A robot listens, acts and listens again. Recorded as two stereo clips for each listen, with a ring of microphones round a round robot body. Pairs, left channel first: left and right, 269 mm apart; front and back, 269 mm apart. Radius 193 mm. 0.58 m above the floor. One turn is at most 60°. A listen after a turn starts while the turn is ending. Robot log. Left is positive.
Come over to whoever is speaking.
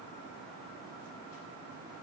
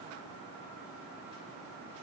cmd idle
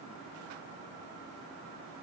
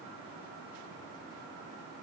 cmd idle
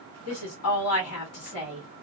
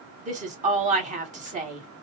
note: The woman speaking: 120° left.
cmd yaw +60
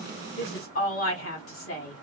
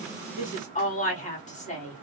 note: The woman speaking is now 60° left.
cmd yaw +60
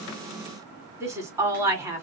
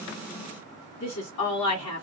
note: The woman speaking is now 10° right.
cmd yaw -10
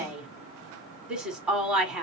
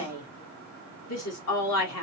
cmd fwd 1.0
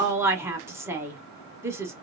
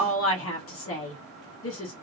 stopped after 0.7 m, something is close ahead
note: The woman speaking is now 10° right.
cmd yaw -10
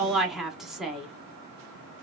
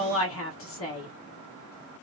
end: Arrived at the woman speaking, straight ahead.